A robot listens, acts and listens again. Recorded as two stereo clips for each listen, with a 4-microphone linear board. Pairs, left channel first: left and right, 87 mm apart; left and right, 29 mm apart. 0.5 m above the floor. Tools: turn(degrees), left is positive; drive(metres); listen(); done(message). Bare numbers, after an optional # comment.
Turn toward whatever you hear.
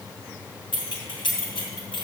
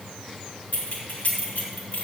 # The keys jangling: about 75° left or 105° left.
turn(75)
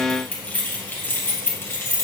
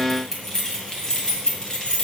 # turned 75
# So it is at 30° left.
turn(30)
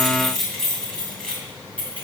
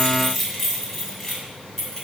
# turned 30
# The keys jangling is now 15° left.
turn(15)
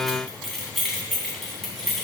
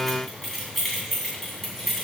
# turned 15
done("Facing the keys jangling, 2 to 4 m away.")